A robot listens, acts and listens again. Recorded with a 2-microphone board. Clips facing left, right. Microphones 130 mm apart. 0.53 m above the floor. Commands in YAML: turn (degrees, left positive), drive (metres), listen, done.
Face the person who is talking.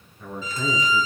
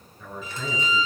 turn: 30
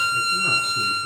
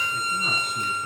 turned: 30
listen: true
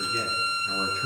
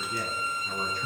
turn: -25
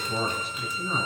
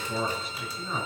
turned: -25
done: "Found it: a man speaking, straight ahead."